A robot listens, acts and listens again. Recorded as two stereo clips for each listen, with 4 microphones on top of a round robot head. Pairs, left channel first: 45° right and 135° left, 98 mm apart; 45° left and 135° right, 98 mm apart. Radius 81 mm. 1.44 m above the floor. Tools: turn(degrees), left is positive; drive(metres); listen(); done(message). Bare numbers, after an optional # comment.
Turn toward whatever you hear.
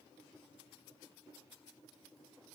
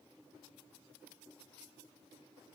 listen()
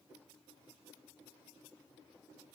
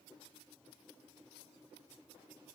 listen()
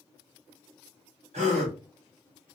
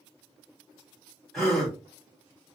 # The gasp: 135° left.
turn(135)
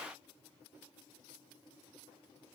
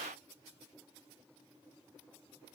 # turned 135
done("I heard a gasp from this way, but can't make it out now.")